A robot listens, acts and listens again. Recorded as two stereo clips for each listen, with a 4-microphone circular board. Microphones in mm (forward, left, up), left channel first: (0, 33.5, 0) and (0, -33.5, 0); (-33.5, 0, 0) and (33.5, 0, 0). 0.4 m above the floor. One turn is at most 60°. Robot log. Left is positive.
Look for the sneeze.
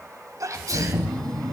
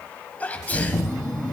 note: The sneeze: 115° right.
cmd yaw -60
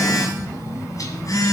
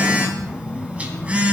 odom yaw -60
note: Nothing new. It was at 55° right.
cmd yaw -55
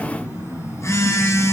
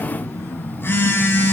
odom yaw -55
end: I heard a sneeze from this way, but can't make it out now.